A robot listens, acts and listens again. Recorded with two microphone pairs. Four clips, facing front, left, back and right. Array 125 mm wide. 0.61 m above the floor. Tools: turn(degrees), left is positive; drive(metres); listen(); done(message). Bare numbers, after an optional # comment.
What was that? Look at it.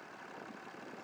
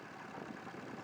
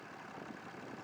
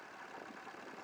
listen()
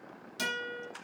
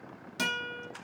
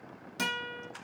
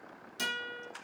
# The guitar: 120° left.
turn(120)
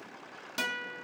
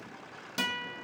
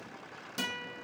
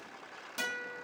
# The guitar is now 45° left.
turn(45)
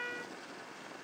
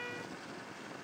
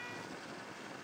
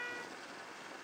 done("Found it: a guitar, straight ahead.")